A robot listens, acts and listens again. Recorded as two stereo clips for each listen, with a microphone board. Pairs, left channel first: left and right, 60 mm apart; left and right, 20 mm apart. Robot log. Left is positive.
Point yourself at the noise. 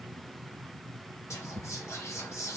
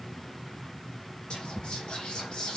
note: The whispering: about 50° left or 130° left.
cmd yaw +50
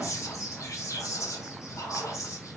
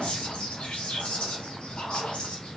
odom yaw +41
note: So it is at 80° left.
cmd yaw +80
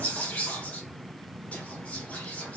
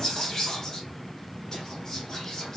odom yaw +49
note: The whispering is now 30° left.
cmd yaw +30
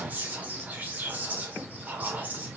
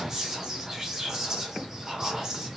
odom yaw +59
note: The whispering is now 30° right.
cmd yaw -30
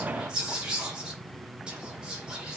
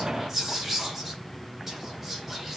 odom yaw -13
note: The whispering is now 15° right.
cmd yaw -15
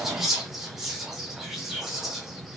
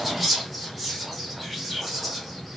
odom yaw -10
end: Found it: whispering, straight ahead, 1 to 2 m away.